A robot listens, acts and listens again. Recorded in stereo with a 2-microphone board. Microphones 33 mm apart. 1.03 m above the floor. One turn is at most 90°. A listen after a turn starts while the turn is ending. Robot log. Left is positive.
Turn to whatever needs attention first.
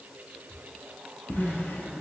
note: The crying: about 70° right or 110° right.
cmd yaw -70
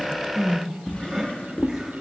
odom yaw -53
note: So it is at 15° right.
cmd yaw -15
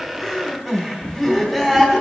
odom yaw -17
end: Found it: crying, straight ahead.